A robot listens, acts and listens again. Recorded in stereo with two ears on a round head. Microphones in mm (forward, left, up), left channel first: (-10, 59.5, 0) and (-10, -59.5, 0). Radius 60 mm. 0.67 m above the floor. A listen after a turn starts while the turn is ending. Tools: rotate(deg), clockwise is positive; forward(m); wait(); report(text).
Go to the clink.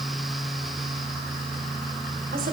wait()
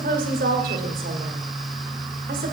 wait()
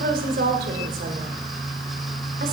report("I can't make out a clink to turn to.")